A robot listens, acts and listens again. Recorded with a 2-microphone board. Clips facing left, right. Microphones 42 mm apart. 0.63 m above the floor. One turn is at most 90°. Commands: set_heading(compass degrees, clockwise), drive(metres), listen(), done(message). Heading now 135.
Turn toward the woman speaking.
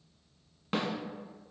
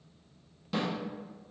listen()
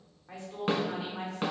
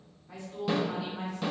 set_heading(80)
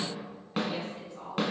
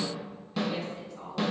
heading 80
set_heading(65)
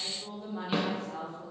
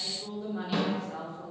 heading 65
done("Facing the woman speaking, 1 to 2 m away.")